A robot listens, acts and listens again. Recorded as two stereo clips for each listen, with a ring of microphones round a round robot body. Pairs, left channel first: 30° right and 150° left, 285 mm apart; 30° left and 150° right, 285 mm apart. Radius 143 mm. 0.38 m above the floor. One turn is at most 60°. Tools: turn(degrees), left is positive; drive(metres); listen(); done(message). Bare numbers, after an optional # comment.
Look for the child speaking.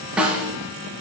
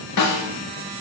listen()
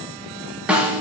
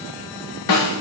listen()
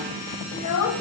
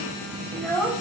# The child speaking: 55° right.
turn(-55)
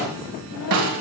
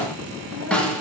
listen()
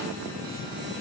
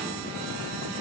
listen()
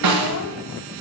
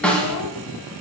done("Facing where the child speaking came from. I can't hear it now.")